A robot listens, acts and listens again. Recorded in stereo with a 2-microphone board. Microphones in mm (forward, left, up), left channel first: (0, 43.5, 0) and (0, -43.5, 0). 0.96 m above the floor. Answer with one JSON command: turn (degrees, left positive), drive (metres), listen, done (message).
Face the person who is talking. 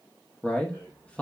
{"turn": 30}
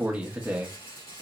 {"turn": -15}
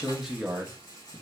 {"done": "Found it: a man speaking, straight ahead, under 1 m away."}